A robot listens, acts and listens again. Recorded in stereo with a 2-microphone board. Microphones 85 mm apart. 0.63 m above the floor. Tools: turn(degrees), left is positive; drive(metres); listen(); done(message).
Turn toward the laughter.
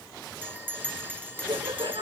turn(degrees=-70)
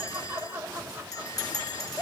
turn(degrees=-20)
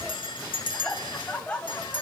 turn(degrees=15)
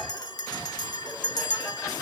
listen()
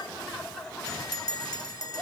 done("Found it: laughter, straight ahead.")